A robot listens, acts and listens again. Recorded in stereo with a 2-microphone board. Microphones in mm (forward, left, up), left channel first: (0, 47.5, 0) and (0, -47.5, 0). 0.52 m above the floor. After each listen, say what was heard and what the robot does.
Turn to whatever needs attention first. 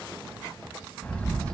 Keep listening.
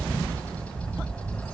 Keep listening.
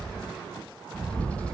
I can't make out anything urgent, only a bird.